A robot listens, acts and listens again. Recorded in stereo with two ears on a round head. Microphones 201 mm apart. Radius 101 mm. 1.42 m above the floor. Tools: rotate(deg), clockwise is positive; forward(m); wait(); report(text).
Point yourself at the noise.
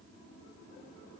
wait()
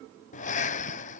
rotate(-35)
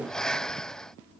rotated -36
report("Facing the breathing.")